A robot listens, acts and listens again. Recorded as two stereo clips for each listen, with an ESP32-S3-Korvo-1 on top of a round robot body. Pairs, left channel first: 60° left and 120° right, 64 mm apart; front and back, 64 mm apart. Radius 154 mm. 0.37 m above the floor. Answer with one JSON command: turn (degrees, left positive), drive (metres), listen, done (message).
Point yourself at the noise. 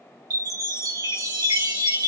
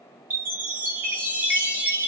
{"turn": -120}
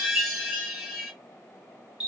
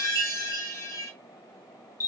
{"turn": -35}
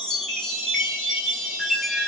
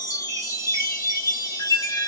{"turn": -25}
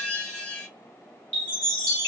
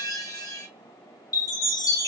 {"turn": -10}
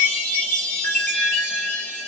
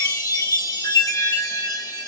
{"done": "Found it: a chime, straight ahead, 2 to 4 m away."}